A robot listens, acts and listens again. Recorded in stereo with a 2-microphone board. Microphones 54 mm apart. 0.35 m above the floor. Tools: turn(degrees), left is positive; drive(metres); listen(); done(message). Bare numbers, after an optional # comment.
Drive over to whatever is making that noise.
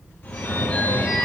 # The phone ringing: about 40° left or 140° left.
turn(40)
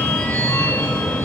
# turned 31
# So it is at 105° left.
turn(105)
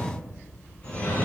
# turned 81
# The phone ringing is now 25° left.
turn(25)
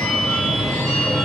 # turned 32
drive(1.0)
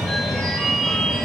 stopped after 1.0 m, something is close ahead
done("Arrived at the phone ringing, straight ahead.")